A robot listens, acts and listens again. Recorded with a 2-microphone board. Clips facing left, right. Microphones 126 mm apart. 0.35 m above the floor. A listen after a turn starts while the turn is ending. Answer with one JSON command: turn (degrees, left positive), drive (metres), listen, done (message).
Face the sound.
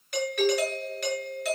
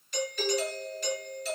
{"turn": 70}
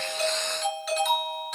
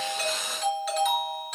{"done": "Facing the doorbell."}